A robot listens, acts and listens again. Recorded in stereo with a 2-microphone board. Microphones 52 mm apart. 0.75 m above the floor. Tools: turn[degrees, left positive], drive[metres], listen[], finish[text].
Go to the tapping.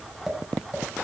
Action: turn[30]
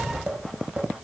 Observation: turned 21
Thought: So it is at 20° right.
Action: turn[-20]
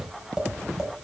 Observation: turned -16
Action: drive[1.0]
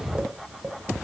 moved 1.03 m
Thought: The tapping is now 15° right.
Action: turn[-15]
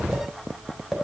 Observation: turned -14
Action: drive[1.0]
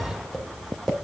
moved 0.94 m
Action: drive[1.0]
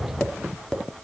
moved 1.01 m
Thought: The tapping is now 10° left.
Action: turn[10]
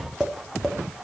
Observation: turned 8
Action: drive[1.0]
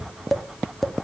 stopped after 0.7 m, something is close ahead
Action: finish[Arrived at the tapping, straight ahead.]